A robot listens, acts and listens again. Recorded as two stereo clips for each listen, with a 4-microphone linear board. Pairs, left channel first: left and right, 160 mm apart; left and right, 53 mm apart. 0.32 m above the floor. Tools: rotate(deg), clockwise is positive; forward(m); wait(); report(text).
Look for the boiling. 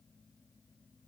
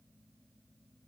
wait()
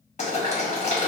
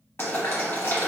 rotate(-50)
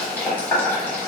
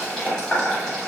rotate(-15)
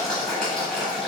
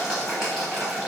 report("Found it: boiling, straight ahead, 1 to 2 m away.")